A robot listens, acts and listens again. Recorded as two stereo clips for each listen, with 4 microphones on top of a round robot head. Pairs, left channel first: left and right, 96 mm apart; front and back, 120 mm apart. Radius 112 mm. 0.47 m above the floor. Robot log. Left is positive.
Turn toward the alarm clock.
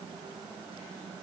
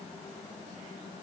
cmd idle
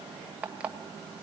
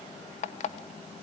note: The alarm clock: 10° right.
cmd yaw -10
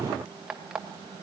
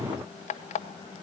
end: Found it: an alarm clock, straight ahead.